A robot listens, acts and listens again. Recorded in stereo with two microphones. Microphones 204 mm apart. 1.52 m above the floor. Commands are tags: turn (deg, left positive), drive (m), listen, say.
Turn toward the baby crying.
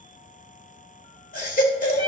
<turn deg="45"/>
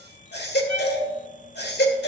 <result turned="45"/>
<turn deg="80"/>
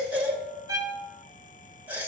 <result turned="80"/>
<turn deg="-10"/>
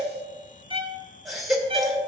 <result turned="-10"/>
<say>Facing the baby crying, 1 to 2 m away.</say>